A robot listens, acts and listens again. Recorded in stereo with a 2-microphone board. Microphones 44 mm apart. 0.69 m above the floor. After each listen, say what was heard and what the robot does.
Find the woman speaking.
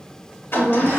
Turn 30° left.
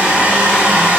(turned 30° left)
Keep listening.
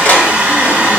Keep listening.
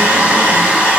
I heard a woman speaking, but can't make it out now. It was about 20° right or 140° left.